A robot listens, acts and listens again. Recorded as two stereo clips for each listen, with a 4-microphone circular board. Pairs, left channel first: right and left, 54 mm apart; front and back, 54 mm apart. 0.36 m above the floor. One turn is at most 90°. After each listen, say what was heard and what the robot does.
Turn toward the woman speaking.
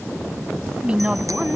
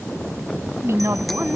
The woman speaking: 155° left. Turn 90° left.
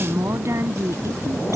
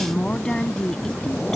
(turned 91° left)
The woman speaking is now 75° left. Turn 75° left.
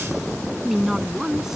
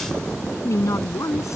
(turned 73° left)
Facing the woman speaking.